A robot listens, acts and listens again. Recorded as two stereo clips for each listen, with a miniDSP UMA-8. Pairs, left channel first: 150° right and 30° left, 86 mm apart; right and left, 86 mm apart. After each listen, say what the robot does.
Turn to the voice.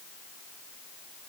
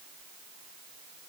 Keep listening.
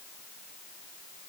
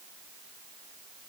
Keep listening.
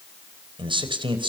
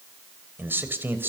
Turn 25° left.
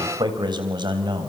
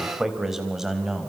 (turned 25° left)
Found it: a man speaking, straight ahead, over 4 m away.